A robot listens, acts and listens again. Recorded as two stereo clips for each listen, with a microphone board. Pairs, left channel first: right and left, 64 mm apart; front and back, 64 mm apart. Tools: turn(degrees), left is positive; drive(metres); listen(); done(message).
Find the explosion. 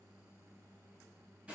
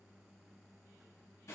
listen()
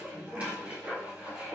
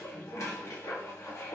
listen()
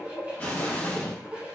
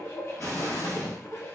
turn(degrees=-30)
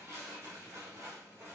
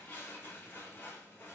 done("I heard an explosion from this way, but can't make it out now.")